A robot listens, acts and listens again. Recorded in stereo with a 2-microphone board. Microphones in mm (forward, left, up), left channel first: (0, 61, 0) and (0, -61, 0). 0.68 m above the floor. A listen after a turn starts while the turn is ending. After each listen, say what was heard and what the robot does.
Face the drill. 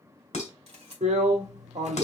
Turn 90° right.
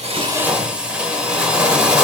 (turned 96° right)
So it is at 10° right. Turn 10° right.
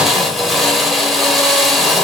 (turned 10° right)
Found it: a drill, straight ahead.